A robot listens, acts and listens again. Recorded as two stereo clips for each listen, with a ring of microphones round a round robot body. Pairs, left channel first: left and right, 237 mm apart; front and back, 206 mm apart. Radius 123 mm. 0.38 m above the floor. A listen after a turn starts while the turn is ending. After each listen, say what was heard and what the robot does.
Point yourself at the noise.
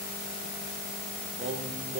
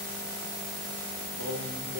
The singing: 150° right. Turn 150° right.
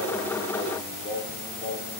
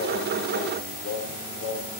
The singing is now 25° left. Turn 25° left.
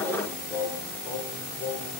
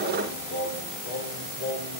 The singing is now 15° left. Turn 15° left.
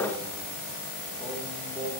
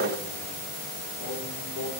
Facing the singing.